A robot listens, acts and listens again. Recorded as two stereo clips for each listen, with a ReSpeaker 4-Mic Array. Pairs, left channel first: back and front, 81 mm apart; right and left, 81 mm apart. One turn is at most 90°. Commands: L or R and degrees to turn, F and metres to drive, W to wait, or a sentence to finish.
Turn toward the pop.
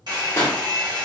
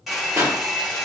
L90
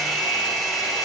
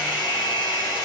L45
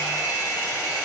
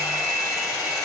I heard a pop from this way, but can't make it out now.